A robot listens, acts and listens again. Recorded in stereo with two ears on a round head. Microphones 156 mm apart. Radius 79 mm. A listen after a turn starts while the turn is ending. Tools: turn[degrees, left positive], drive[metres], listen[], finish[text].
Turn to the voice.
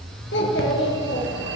Thought: The child speaking: about 70° left or 110° left.
Action: turn[70]
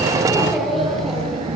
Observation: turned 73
Action: finish[Facing the child speaking, over 4 m away.]